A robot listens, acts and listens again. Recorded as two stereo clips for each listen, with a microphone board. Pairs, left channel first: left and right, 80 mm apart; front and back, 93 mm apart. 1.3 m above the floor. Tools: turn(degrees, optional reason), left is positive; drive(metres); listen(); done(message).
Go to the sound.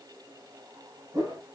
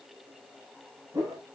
turn(degrees=-120, reason="The whoosh: 120° right.")
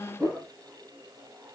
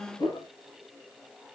turn(degrees=-25, reason="The whoosh is now 25° right.")
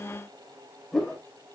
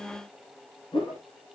turn(degrees=10, reason="The whoosh is now 10° left.")
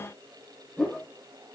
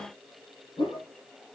drive(metres=1.0)
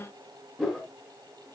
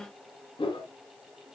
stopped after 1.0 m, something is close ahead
done("Something is in my way. I am facing the whoosh but have not reached it.")